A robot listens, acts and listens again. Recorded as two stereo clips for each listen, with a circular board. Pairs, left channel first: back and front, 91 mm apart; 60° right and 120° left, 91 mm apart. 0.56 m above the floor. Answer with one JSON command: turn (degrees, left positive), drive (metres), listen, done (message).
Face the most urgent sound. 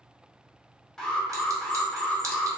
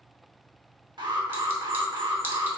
{"turn": 95}
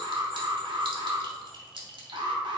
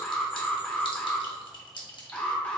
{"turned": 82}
{"turn": 15}
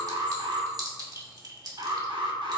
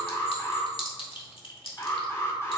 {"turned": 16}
{"done": "Facing the alarm."}